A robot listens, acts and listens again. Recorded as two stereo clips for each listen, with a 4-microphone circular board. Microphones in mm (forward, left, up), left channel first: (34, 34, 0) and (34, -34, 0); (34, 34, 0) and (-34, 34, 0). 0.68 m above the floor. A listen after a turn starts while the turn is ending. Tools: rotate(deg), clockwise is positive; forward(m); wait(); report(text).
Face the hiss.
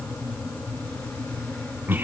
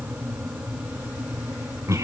wait()
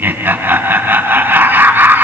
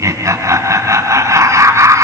wait()
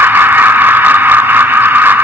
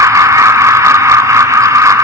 report("I can't make out a hiss, only laughter.")